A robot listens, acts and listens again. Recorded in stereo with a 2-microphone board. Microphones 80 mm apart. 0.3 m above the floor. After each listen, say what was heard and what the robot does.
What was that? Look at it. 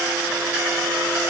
Keep listening.
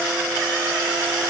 Keep listening.
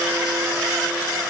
I can't make out anything.